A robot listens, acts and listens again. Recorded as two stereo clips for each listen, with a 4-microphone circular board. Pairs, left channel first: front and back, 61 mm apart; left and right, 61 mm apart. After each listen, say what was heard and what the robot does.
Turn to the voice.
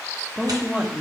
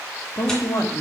The woman speaking: 105° left. Turn 105° left.
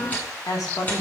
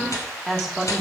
Facing the woman speaking.